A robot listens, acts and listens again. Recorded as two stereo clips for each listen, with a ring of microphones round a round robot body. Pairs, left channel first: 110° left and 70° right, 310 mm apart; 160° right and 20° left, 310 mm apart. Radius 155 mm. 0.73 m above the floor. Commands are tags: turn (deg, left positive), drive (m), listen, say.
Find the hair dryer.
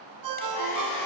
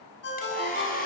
<turn deg="135"/>
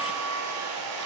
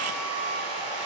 <turn deg="-20"/>
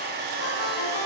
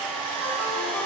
<say>Found it: a hair dryer, straight ahead.</say>